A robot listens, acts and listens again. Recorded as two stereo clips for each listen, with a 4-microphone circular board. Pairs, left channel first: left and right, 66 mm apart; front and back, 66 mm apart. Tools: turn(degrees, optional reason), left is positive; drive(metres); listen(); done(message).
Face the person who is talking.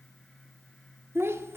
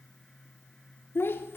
turn(degrees=-45, reason="The child speaking: 45° right.")
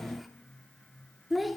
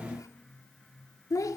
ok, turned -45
done("Facing the child speaking, 1 to 2 m away.")